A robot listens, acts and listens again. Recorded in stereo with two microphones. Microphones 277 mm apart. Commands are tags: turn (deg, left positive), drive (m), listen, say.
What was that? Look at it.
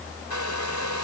<turn deg="90"/>
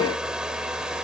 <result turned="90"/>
<say>Facing the hair dryer.</say>